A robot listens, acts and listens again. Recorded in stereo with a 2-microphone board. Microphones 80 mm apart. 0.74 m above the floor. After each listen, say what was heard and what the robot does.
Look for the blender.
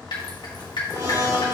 The blender: about 40° right or 140° right. Turn 40° right.
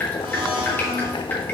So it is at 100° right. Turn 100° right.
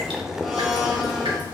Found it: a blender, straight ahead.